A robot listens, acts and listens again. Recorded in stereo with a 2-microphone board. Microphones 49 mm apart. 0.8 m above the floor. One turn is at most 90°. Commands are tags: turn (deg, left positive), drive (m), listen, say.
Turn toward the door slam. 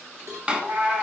<turn deg="-20"/>
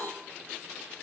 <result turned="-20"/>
<listen/>
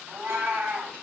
<say>I heard a door slam, but can't make it out now. It was about straight ahead or 140° right.</say>